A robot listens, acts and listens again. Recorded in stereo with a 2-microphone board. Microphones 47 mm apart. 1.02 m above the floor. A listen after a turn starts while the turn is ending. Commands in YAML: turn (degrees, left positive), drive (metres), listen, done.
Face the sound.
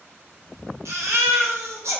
turn: -90
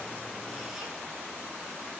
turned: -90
listen: true
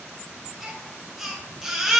done: "Facing the baby crying."